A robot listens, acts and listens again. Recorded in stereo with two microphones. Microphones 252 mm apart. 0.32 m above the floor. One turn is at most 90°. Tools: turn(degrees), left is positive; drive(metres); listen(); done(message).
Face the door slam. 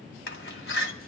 turn(degrees=45)
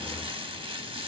listen()
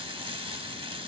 done("I heard a door slam, but can't make it out now. It was about straight ahead or 90° left.")